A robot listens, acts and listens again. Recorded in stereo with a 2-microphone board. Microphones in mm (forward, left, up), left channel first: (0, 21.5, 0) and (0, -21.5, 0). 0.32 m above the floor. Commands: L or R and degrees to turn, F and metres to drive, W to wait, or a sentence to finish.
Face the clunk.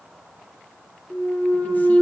L90
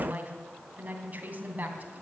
I heard a clunk from this way, but can't make it out now.